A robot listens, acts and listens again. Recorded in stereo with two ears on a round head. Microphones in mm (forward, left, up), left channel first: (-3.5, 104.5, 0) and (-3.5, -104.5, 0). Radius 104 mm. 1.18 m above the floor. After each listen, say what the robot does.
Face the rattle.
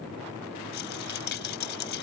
Turn 50° left.
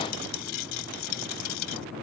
Turn 80° left.
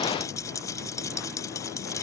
Turn 15° left.
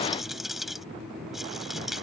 Facing the rattle.